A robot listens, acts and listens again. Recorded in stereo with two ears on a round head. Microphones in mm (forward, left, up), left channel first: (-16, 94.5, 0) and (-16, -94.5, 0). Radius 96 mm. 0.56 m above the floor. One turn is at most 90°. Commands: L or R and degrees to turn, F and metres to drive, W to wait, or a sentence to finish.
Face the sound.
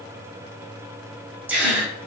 R30
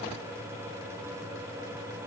W
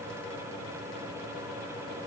I heard a gasp, but can't make it out now. It was about 20° left or 140° right.